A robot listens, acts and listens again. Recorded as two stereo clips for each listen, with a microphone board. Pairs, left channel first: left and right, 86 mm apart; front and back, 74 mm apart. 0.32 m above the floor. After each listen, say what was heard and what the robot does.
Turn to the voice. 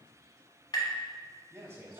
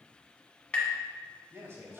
The man speaking: 135° right. Turn 135° right.
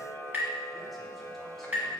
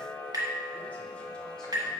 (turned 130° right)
Keep listening.
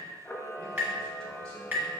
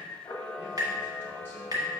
Keep listening.
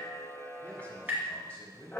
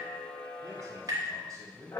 The man speaking is now 165° left. Turn 165° left.
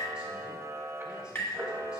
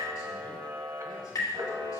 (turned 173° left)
Keep listening.
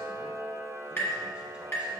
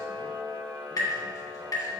Keep listening.
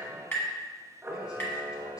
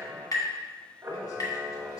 I heard a man speaking from this way, but can't make it out now.